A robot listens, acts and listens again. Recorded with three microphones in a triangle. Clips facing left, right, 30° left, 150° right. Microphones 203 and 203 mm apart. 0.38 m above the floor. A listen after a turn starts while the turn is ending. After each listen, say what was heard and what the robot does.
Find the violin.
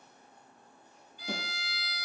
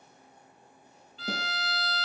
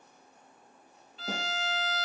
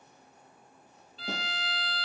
The violin: 90° right. Turn 90° right.
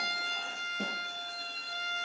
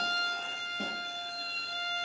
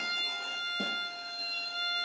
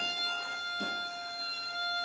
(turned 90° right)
The violin is now 35° right. Turn 35° right.
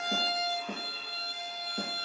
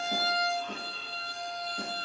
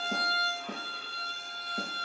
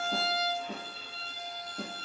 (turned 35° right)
Found it: a violin, straight ahead, 1 to 2 m away.